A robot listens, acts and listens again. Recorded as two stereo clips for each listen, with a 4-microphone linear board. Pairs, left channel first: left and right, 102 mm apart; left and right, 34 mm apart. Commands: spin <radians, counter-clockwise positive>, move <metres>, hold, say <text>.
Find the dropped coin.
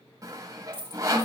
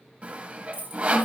spin -1.05
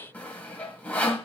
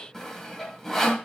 hold
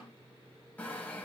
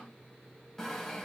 say I heard a dropped coin, but can't make it out now. It was about straight ahead or 60° right.